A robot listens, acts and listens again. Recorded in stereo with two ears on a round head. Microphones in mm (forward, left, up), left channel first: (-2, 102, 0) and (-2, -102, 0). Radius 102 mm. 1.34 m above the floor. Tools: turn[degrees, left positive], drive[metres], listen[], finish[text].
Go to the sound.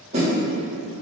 Thought: The snare drum: about 30° right or 150° right.
Action: turn[-30]
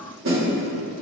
Thought: So it is at 120° right.
Action: turn[-120]
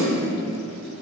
Thought: The snare drum is now 45° right.
Action: turn[-45]
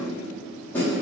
Thought: The snare drum is now 10° left.
Action: turn[10]
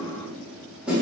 Action: drive[1.0]
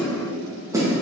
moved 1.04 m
Thought: The snare drum is now 15° right.
Action: turn[-15]
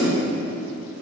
Action: drive[1.0]
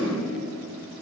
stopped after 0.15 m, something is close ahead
Action: listen[]
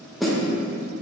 Action: finish[I am next to the snare drum.]